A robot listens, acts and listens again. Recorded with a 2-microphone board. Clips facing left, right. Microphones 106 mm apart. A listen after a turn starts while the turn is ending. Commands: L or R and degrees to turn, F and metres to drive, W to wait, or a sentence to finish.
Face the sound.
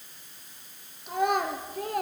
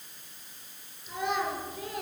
L50
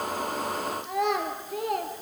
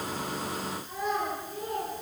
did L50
L80
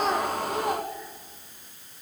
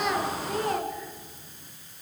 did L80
L15
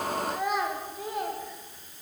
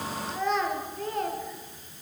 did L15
L10
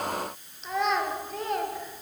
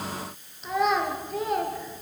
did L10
Found it: a child speaking, straight ahead, 2 to 4 m away.